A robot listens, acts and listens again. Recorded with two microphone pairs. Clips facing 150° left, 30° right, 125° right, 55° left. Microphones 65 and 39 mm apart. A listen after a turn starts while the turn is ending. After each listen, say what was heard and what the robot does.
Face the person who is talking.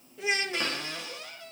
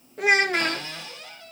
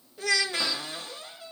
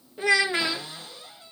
The child speaking: 10° right. Turn 10° right.
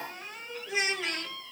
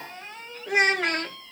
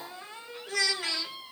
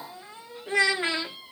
Found it: a child speaking, straight ahead.